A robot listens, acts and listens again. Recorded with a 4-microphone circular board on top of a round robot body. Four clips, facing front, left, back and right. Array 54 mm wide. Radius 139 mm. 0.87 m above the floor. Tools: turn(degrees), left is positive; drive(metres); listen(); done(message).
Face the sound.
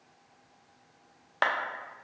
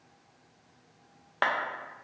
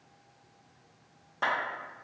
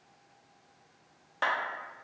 turn(degrees=30)
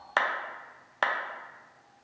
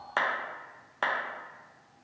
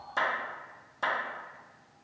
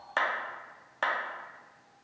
done("Facing the clap, under 1 m away.")